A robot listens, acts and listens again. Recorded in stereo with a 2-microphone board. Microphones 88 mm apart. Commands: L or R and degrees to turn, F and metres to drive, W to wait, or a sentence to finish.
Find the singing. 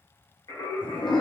L35
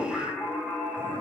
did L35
R10
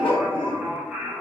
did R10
R20
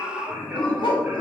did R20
R10
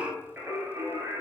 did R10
R30
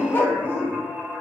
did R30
Found it: singing, straight ahead, 1 to 2 m away.